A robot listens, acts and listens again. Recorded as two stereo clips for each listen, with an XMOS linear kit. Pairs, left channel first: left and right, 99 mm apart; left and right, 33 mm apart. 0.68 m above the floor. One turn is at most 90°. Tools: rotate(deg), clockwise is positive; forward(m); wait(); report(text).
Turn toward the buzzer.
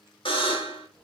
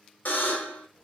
rotate(-60)
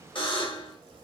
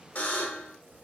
rotate(-60)
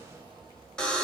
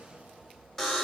rotate(-10)
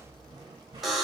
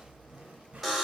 report("Facing the buzzer, under 1 m away.")